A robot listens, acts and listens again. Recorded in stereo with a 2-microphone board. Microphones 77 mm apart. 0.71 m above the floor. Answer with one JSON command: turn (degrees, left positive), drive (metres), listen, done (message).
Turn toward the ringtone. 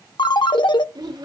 {"turn": 90}
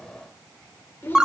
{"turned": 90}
{"turn": -10}
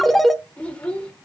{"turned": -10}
{"done": "Found it: a ringtone, straight ahead."}